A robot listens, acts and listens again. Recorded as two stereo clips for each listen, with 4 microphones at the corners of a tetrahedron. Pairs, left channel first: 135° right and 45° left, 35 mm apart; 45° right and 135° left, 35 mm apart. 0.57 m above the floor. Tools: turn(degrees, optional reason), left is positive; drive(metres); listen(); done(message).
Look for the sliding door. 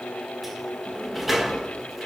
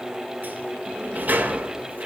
turn(degrees=130, reason="The sliding door: 130° left.")
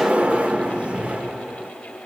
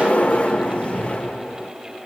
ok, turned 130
done("Found it: a sliding door, straight ahead.")